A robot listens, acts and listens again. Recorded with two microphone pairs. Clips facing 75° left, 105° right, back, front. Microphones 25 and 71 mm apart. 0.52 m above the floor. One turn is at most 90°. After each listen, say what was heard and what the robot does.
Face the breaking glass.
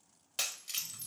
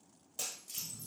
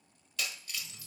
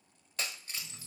The breaking glass: 55° left. Turn 55° left.
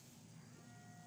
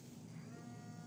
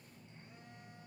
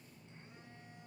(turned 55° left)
Facing where the breaking glass came from. I can't hear it now.